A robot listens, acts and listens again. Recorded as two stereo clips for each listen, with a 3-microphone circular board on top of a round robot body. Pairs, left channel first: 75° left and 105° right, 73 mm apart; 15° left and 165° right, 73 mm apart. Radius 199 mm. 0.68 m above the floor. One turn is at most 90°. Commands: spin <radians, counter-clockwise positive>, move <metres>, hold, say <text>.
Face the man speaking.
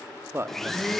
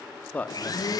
spin -0.96
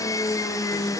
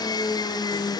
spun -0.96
hold
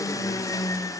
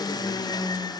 hold
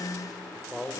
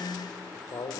spin -0.17
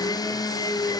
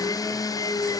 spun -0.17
hold
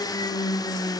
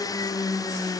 hold
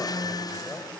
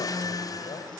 say Facing where the man speaking came from. I can't hear it now.